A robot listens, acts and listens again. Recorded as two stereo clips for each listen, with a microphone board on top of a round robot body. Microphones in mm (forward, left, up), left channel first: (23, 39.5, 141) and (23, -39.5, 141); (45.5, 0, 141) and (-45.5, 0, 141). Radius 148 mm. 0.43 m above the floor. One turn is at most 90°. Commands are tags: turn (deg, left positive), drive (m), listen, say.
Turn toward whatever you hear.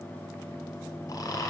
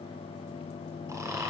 <turn deg="90"/>
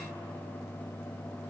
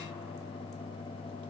<turn deg="35"/>
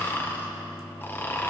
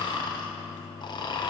<turn deg="30"/>
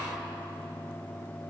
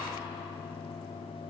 <listen/>
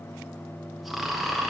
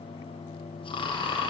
<say>Found it: snoring, straight ahead, 1 to 2 m away.</say>